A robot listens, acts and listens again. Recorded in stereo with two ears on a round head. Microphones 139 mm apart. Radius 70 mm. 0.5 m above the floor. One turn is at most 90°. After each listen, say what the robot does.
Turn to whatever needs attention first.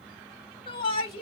Turn 35° left.
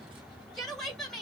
Found it: a shout, straight ahead, 1 to 2 m away.